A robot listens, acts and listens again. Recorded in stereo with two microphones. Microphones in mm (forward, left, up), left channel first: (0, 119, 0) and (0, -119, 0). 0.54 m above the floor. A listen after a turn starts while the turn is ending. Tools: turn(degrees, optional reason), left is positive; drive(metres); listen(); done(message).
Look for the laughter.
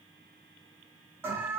listen()
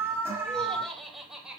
turn(degrees=-30)
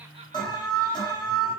listen()
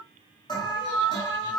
listen()
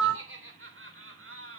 turn(degrees=-120, reason="So it is at 120° right.")
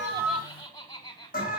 turn(degrees=15, reason="The laughter is now 15° left.")
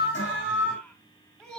done("Facing the laughter.")